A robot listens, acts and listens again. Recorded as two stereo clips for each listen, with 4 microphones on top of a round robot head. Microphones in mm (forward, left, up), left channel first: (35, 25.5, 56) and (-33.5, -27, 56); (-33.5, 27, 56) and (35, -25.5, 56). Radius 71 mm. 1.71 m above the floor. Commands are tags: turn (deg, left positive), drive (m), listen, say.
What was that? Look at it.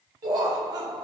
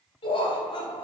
<turn deg="180"/>
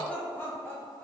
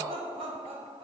<turn deg="-25"/>
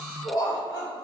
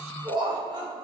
<say>Facing the laughter.</say>